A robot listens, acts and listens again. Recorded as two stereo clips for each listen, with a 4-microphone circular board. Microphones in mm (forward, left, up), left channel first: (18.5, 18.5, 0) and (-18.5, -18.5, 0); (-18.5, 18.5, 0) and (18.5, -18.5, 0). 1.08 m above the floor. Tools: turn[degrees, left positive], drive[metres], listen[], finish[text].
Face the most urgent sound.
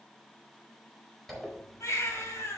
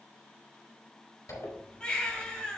Thought: The baby crying: 65° left.
Action: turn[65]
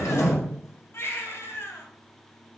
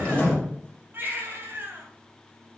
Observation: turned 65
Action: finish[Facing the baby crying.]